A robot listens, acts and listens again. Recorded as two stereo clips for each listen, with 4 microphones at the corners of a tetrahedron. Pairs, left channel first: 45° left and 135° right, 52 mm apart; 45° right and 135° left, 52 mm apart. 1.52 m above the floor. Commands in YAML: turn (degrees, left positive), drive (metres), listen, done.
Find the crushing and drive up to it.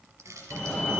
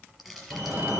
turn: -140
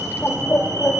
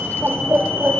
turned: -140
listen: true
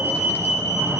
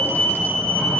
listen: true
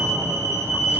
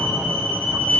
done: "Facing where the crushing came from. I can't hear it now. I did not reach it."